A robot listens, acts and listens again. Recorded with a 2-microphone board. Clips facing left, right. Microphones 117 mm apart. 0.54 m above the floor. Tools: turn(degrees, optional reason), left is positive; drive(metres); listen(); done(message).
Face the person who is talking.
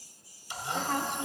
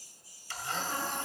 turn(degrees=70, reason="The woman speaking: about 70° left or 110° left.")
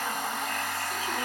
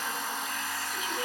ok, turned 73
listen()
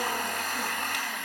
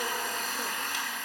listen()
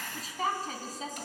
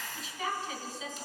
turn(degrees=45, reason="So it is at 45° left.")
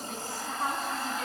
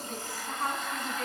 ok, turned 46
done("Found it: a woman speaking, straight ahead.")